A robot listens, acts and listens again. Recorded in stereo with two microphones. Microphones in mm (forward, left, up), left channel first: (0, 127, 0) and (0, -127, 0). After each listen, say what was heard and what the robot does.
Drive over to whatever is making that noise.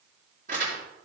The crumpling: about 30° right or 150° right. Turn 30° right.
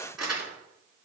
Drive 1.0 m forward.
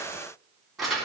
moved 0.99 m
Drive 1.0 m forward.
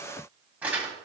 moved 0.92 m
Drive 1.0 m forward.
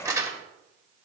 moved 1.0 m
The crumpling is now 15° right. Turn 15° right.
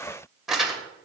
Drive 1.0 m forward.
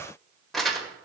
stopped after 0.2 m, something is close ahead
Arrived at the crumpling, straight ahead.